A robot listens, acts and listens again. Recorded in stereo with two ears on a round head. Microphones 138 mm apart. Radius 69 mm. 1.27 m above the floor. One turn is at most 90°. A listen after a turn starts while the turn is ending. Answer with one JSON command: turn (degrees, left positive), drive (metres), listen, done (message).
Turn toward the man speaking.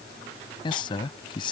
{"turn": 30}
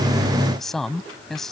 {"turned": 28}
{"done": "Facing the man speaking."}